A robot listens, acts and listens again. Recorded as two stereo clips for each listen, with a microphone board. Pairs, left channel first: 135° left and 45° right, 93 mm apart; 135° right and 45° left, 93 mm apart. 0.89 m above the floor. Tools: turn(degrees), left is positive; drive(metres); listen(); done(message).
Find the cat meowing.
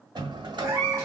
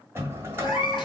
turn(degrees=-105)
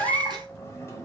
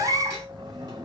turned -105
turn(degrees=-10)
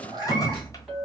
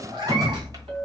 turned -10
done("Facing the cat meowing, 1 to 2 m away.")